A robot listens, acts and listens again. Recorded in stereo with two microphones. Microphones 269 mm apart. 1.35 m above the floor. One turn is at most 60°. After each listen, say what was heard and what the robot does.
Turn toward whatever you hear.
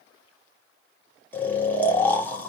Turn 30° left.
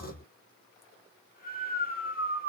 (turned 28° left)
So it is at 145° left. Turn 60° left.
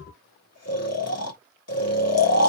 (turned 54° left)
The snoring is now 90° left. Turn 60° left.
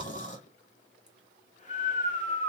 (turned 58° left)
The snoring is now 30° left. Turn 30° left.
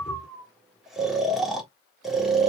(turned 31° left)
Found it: snoring, straight ahead, 1 to 2 m away.